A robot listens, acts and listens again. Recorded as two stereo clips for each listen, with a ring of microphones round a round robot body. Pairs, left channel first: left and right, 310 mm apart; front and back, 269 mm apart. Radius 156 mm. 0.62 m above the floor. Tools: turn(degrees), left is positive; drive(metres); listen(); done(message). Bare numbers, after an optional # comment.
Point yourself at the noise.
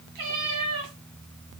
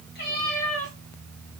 # The cat meowing: 70° right.
turn(-70)
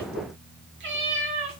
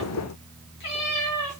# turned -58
# The cat meowing is now 40° right.
turn(-40)
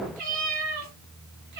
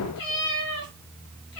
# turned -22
# The cat meowing is now 30° right.
turn(-30)
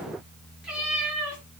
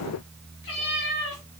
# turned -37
done("Found it: a cat meowing, straight ahead.")